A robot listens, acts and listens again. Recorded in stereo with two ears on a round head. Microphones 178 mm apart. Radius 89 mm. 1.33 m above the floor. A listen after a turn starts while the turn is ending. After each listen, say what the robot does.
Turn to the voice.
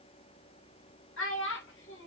Turn 70° left.
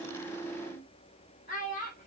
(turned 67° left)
Turn 40° left.
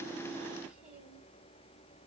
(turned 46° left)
Keep listening.
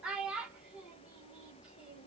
Found it: a child speaking, straight ahead.